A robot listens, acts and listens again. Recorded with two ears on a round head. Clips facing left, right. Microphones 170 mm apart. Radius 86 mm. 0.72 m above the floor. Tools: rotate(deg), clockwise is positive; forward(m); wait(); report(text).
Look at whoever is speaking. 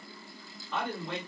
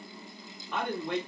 rotate(50)
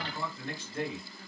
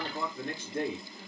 rotate(65)
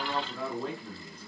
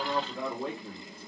report("Found it: a man speaking, straight ahead, 1 to 2 m away.")